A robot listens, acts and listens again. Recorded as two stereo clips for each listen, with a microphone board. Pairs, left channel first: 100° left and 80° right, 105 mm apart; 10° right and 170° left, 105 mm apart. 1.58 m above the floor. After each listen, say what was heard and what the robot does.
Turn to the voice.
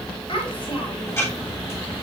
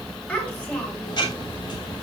The child speaking: 65° left. Turn 65° left.
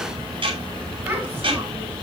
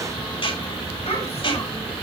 Keep listening.
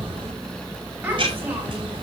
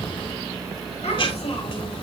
The child speaking is now 10° right. Turn 10° right.
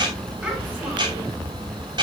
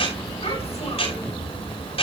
Keep listening.
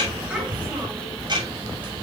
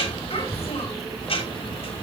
Keep listening.
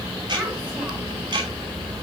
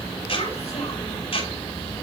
I heard a child speaking from this way, but can't make it out now.